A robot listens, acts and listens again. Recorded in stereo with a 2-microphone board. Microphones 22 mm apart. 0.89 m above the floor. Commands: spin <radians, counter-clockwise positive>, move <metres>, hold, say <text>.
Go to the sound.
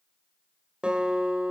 spin -0.87
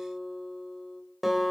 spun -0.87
move 1.0
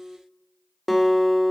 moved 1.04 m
move 1.0
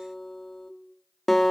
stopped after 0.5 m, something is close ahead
spin 0.17
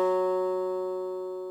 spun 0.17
say Arrived at the guitar, straight ahead.